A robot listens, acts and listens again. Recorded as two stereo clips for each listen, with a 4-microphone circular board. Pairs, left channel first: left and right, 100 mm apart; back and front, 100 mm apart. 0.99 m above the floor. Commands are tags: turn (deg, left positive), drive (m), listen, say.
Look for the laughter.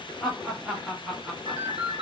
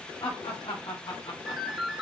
<turn deg="-170"/>
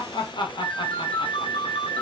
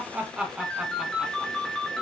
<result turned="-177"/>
<turn deg="85"/>
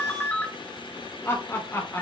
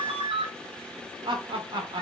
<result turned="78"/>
<turn deg="30"/>
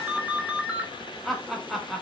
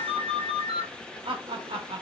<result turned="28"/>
<say>Found it: laughter, straight ahead, 1 to 2 m away.</say>